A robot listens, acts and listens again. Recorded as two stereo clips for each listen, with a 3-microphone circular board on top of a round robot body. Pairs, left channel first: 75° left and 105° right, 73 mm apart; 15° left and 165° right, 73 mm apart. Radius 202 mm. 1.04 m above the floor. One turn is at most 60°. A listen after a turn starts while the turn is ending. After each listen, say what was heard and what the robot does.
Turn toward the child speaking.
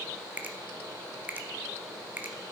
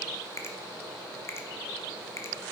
Keep listening.
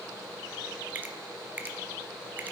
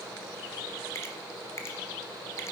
Keep listening.
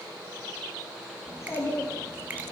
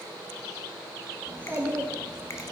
The child speaking: 130° left. Turn 60° left.
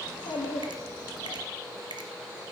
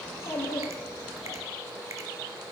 The child speaking is now 55° left. Turn 55° left.
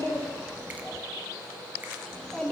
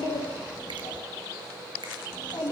Facing the child speaking, 1 to 2 m away.